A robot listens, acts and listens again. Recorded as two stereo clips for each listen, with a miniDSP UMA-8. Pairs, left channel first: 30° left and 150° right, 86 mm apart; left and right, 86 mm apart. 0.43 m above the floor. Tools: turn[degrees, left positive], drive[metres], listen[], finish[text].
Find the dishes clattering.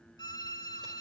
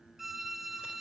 Action: listen[]
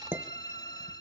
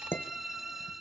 Thought: The dishes clattering: 150° left.
Action: turn[150]
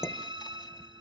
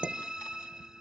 Thought: The dishes clattering is now 20° right.
Action: turn[-20]
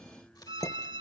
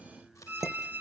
Action: finish[Facing the dishes clattering, under 1 m away.]